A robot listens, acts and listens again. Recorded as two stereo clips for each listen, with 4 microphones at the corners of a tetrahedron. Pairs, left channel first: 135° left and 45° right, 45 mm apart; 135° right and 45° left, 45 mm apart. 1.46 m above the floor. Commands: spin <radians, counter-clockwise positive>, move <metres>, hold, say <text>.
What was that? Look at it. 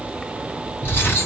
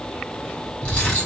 spin 2.88
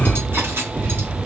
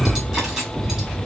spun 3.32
spin -0.44
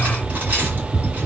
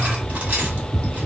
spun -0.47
say Found it: cutlery clinking, straight ahead.